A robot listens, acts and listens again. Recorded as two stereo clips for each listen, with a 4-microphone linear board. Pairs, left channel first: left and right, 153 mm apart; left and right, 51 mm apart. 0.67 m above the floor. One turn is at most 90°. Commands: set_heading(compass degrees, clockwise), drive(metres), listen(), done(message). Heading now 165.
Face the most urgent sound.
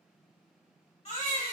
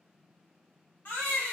set_heading(120)
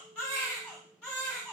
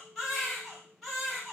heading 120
done("Found it: a baby crying, straight ahead, 1 to 2 m away.")